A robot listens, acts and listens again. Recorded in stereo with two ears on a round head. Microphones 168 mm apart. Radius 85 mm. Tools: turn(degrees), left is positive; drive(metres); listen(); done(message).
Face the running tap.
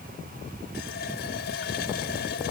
turn(degrees=55)
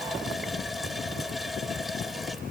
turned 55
done("Facing the running tap.")